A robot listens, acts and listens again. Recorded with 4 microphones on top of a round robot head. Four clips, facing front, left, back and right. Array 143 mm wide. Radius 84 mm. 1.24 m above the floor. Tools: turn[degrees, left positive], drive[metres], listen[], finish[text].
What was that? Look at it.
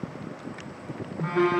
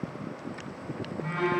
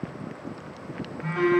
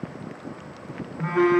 Thought: The phone buzzing: 60° right.
Action: turn[-60]
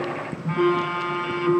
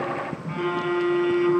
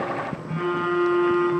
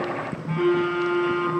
Action: finish[Found it: a phone buzzing, straight ahead, under 1 m away.]